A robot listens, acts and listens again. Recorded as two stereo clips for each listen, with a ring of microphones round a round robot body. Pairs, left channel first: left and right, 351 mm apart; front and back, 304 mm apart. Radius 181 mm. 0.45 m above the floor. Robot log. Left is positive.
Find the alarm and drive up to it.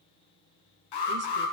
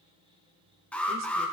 note: The alarm: 85° left.
cmd yaw +85
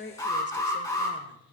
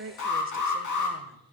note: The alarm is now 10° left.
cmd yaw +10
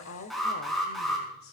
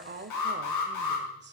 cmd fwd 1.0
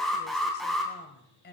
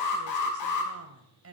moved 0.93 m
cmd fwd 1.0
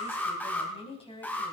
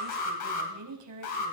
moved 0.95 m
cmd fwd 1.0
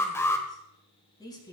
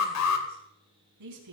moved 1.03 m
note: The alarm is now 10° left.
cmd yaw +10
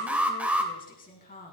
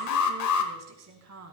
cmd fwd 1.0
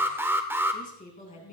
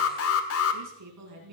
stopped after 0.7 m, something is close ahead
note: The alarm is now 10° right.
cmd yaw -10
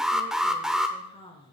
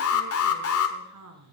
end: Arrived at the alarm, straight ahead.